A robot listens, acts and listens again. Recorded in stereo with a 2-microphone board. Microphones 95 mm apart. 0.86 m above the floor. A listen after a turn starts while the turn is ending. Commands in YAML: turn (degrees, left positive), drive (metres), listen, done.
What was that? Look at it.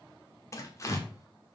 turn: 30
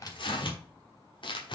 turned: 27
turn: 120
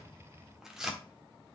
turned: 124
done: "Facing the tearing paper, 1 to 2 m away."